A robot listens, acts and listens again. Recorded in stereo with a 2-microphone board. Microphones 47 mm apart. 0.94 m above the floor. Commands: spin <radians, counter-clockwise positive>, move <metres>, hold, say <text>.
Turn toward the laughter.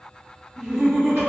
spin -0.26
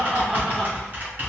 spin -0.52
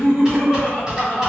say Found it: laughter, straight ahead.